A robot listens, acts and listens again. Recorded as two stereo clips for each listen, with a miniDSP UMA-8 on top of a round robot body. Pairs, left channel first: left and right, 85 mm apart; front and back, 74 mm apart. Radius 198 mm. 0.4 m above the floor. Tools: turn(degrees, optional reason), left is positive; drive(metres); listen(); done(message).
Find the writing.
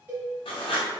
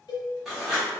turn(degrees=95, reason="The writing: 95° left.")
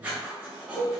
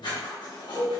turn(degrees=-15, reason="The writing is now 15° right.")
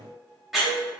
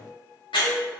done("Facing the writing.")